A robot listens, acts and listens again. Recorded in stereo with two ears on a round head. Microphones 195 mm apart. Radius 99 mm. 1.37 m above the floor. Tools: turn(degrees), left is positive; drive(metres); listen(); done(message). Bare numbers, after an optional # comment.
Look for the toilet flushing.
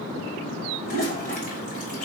# The toilet flushing: about 40° left or 140° left.
turn(40)
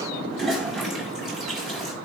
done("Facing the toilet flushing.")